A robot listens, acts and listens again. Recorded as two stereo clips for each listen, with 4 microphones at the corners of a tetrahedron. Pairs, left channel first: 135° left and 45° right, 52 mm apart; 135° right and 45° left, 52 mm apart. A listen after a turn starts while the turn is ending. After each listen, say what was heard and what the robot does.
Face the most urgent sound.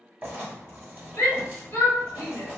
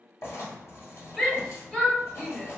The shout: 150° left. Turn 150° left.
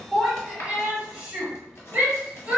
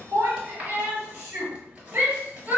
The shout is now 10° left. Turn 10° left.
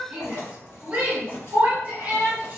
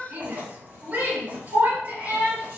Found it: a shout, straight ahead.